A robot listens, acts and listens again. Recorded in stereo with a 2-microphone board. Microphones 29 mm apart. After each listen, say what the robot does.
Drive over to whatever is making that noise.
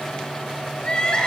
Turn 30° left.
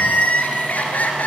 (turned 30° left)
Turn 125° left.
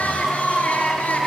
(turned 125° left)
Turn 55° left.
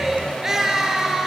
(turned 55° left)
Turn 15° right.
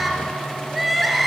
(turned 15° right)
Drive 1.0 m forward.
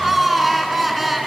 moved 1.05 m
Drive 1.0 m forward.
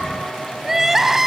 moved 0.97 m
Turn 10° right.
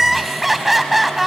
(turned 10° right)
Drive 1.0 m forward.
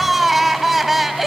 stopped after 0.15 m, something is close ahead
Arrived at the crying, straight ahead.